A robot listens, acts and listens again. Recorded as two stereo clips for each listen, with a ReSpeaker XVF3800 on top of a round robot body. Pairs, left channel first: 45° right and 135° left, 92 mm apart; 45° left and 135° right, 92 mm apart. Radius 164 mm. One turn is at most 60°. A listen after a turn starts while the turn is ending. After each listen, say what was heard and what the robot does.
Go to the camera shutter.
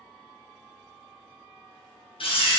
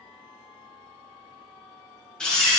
The camera shutter: 35° right. Turn 35° right.
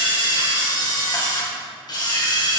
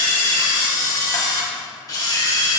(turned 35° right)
Drive 1.0 m forward.
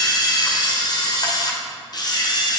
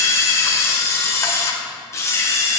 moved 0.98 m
The camera shutter is now 10° right. Turn 10° right.
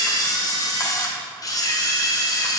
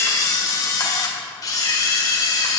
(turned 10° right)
Drive 1.0 m forward.
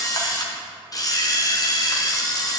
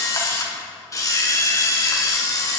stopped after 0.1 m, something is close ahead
Arrived at the camera shutter, straight ahead.